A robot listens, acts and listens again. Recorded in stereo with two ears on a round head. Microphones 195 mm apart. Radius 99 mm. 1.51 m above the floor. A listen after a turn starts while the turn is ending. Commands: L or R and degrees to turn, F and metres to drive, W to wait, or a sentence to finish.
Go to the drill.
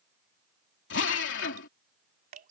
L55
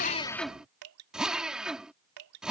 F1.0
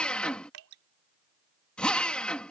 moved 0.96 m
F1.0
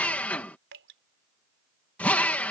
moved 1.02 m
F1.0
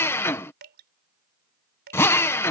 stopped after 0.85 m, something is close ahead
L10
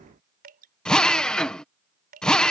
I am next to the drill.